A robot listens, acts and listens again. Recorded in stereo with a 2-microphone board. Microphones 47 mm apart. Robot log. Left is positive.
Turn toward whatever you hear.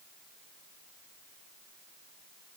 cmd idle
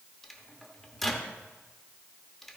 cmd yaw +30
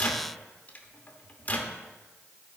note: So it is at 145° left.
cmd yaw +145
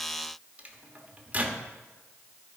note: The microwave is now 30° right.
cmd yaw -30
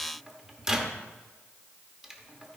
note: The microwave is now 10° right.
cmd yaw -10
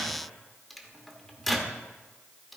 end: Found it: a microwave, straight ahead, 1 to 2 m away.